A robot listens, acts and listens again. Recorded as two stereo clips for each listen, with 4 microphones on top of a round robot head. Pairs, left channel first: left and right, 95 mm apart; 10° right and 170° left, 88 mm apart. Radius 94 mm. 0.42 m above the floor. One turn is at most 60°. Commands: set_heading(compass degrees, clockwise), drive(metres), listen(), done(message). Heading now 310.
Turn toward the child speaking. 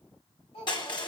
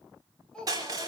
set_heading(250)
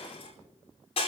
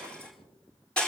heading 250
set_heading(240)
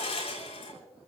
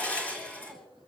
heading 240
listen()
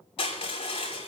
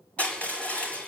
done("Facing where the child speaking came from. I can't hear it now.")